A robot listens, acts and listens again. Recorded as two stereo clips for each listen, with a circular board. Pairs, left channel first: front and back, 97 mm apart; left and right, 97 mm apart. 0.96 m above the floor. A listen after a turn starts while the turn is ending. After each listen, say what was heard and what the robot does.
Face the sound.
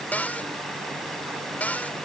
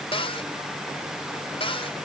The cupboard door: 75° left. Turn 75° left.
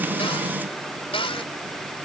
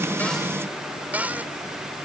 The cupboard door is now 20° right. Turn 20° right.
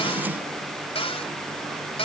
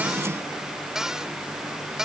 Found it: a cupboard door, straight ahead.